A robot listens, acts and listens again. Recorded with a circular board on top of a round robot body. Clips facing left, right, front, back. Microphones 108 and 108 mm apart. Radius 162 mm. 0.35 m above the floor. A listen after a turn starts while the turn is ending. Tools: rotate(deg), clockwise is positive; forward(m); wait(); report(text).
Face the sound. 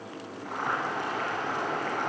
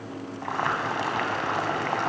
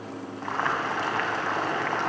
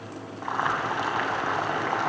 rotate(100)
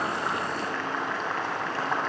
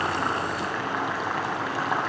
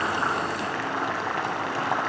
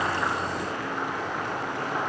rotate(10)
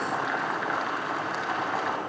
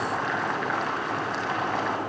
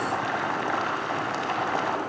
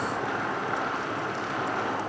report("Facing the boiling.")